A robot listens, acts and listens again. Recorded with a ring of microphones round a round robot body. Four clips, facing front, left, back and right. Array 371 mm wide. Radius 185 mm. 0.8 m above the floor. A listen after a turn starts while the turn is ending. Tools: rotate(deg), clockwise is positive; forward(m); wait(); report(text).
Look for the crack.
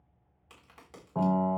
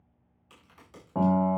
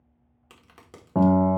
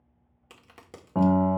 rotate(120)
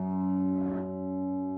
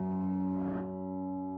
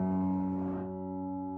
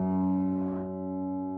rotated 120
report("Facing where the crack came from. I can't hear it now.")